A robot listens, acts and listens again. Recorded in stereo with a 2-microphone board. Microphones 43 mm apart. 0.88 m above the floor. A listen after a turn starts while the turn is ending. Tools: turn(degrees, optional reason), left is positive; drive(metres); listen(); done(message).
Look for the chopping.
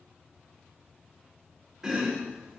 turn(degrees=-30)
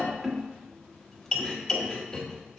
turn(degrees=15, reason="So it is at 15° left.")
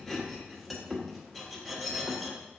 done("Found it: chopping, straight ahead.")